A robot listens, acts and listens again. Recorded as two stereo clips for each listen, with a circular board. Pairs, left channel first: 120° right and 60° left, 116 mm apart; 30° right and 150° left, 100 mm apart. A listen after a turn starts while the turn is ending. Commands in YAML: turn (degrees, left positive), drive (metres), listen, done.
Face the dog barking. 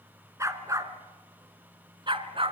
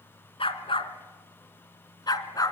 turn: 20
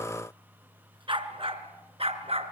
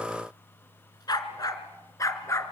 turn: 30
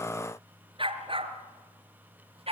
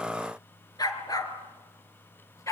turn: 25
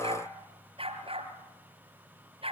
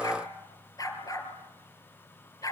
turn: 20
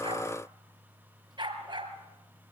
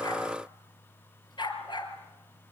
turn: 10
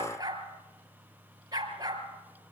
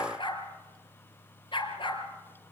done: "Facing the dog barking, 2 to 4 m away."